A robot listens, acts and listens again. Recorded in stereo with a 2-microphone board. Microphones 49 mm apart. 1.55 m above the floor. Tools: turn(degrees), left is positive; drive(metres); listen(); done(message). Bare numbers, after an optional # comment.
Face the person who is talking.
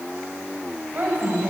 # The woman speaking: about 40° right or 140° right.
turn(-40)
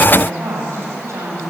# So it is at 100° right.
turn(-100)
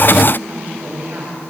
# The woman speaking is now 40° right.
turn(-40)
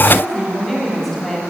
done("Found it: a woman speaking, straight ahead, over 4 m away.")